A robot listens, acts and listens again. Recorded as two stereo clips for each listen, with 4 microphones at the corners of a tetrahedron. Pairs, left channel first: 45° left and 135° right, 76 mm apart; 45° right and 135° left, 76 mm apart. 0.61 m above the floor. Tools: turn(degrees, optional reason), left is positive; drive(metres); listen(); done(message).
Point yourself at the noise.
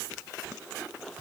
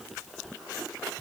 listen()
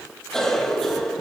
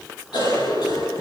turn(degrees=-40, reason="The cough: 40° right.")
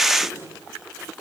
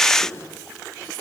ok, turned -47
turn(degrees=10, reason="Nothing new. It was at 10° left.")
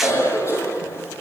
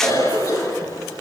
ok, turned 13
done("Found it: a cough, straight ahead, over 4 m away.")